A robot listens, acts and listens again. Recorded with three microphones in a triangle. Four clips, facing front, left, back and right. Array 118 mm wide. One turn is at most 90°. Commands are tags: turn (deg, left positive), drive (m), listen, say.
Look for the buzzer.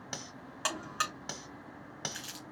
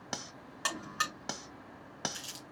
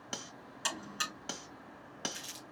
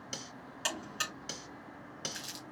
<turn deg="20"/>
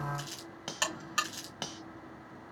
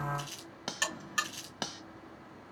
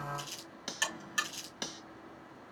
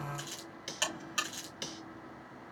<say>Found it: a buzzer, straight ahead.</say>